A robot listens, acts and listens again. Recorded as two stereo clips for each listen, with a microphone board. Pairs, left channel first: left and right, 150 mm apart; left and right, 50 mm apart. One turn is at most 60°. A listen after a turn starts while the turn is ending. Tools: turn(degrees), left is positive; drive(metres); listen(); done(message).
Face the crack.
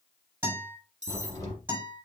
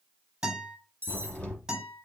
turn(degrees=20)
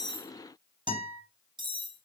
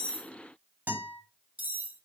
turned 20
listen()
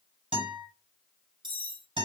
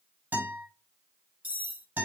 done("I heard a crack, but can't make it out now. It was about straight ahead or 140° left.")